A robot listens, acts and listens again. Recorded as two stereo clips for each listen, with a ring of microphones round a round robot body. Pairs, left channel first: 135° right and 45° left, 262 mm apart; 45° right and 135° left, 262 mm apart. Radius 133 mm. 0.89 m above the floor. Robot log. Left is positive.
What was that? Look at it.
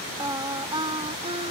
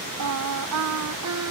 note: The singing: 115° left.
cmd yaw +115
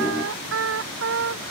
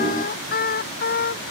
end: Facing the singing.